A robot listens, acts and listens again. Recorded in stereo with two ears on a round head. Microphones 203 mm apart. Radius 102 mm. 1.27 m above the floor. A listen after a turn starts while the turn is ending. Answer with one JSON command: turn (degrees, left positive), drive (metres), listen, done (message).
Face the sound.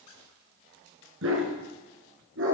{"turn": -60}
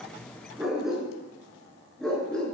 {"done": "Facing the dog barking."}